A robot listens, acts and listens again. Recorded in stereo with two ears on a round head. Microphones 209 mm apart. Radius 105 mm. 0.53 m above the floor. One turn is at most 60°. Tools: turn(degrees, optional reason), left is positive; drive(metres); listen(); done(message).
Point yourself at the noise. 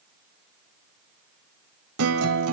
turn(degrees=-60, reason="The guitar: about 65° right or 115° right.")
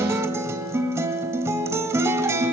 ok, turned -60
turn(degrees=-10, reason="So it is at 10° right.")
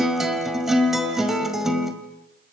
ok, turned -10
done("Facing the guitar.")